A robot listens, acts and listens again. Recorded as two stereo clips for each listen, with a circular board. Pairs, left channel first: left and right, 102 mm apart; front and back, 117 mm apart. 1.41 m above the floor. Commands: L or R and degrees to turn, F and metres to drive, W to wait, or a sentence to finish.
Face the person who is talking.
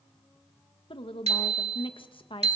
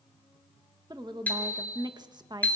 L125
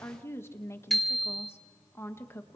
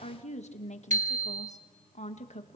L25
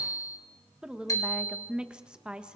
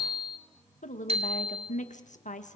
R10
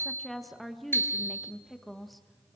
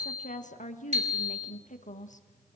Facing the woman speaking.